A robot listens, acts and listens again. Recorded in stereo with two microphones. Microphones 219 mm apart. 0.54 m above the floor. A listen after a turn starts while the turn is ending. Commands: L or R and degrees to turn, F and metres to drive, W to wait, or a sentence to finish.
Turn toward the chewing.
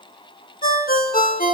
W
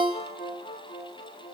W
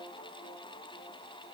I can't make out chewing, only a ringtone.